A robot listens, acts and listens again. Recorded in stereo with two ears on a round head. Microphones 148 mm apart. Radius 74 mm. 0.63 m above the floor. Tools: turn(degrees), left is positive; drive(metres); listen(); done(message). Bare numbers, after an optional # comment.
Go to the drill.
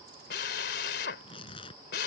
# The drill: about 70° left or 110° left.
turn(70)
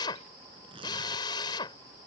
# So it is at 30° left.
turn(30)
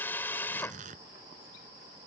# The drill is now 15° left.
turn(15)
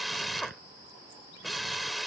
drive(1.0)
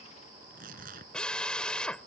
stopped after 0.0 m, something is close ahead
done("Blocked. The drill is further on, straight ahead.")